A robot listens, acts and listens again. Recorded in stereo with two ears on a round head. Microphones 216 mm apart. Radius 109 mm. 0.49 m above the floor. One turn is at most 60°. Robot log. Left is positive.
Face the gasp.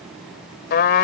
cmd idle
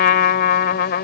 cmd idle
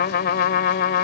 end: I can't make out a gasp, only a trumpet.